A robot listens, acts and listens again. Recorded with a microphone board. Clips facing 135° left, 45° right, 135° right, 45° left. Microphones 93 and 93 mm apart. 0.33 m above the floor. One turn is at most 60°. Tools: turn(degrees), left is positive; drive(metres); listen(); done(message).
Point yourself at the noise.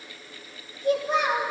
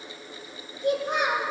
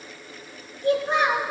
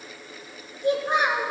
turn(degrees=-30)
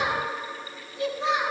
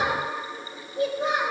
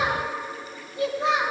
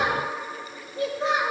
done("Facing the child speaking.")